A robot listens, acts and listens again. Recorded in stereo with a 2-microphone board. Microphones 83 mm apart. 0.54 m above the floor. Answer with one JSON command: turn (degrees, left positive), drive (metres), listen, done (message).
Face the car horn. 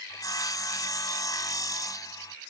{"listen": true}
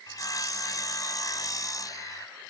{"listen": true}
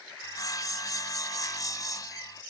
{"done": "I can't make out a car horn, only sawing."}